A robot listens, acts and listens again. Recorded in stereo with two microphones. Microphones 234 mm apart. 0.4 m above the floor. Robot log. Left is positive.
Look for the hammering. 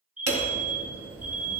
cmd yaw -90
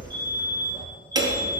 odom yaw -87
note: So it is at 15° right.
cmd yaw -15
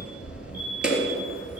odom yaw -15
end: Facing the hammering, 2 to 4 m away.